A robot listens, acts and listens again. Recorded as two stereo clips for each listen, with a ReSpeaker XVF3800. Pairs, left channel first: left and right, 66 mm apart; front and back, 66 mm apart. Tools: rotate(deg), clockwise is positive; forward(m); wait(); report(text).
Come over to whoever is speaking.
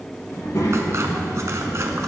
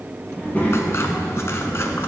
rotate(-65)
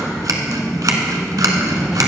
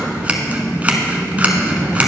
forward(1.0)
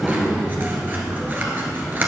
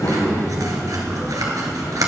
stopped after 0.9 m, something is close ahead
report("Arrived at the child speaking, straight ahead.")